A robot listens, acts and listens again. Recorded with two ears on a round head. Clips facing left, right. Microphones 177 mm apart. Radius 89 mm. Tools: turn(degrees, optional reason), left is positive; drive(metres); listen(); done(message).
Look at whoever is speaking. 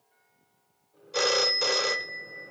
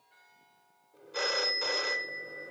listen()
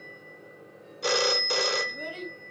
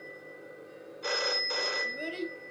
turn(degrees=-25, reason="The child speaking: about 25° right or 155° right.")
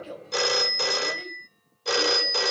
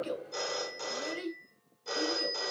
turn(degrees=-130, reason="So it is at 130° right.")
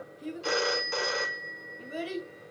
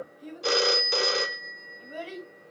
turn(degrees=20, reason="The child speaking is now 20° left.")
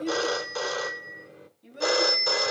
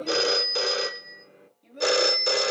done("Facing the child speaking, 2 to 4 m away.")